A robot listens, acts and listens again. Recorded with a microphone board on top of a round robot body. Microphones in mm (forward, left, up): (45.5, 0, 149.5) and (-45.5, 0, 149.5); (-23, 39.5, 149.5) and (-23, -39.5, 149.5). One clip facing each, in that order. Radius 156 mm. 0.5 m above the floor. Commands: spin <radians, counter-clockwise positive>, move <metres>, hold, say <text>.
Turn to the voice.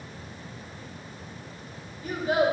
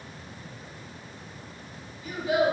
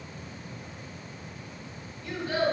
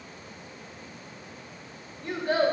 spin -0.87
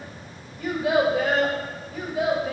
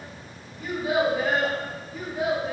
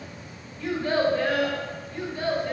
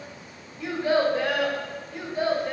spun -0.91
spin -0.35
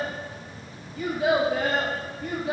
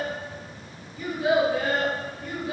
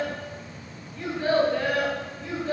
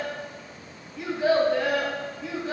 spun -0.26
spin -0.26
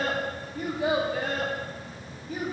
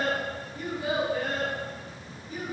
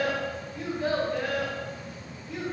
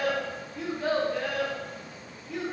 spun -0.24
say Found it: a child speaking, straight ahead.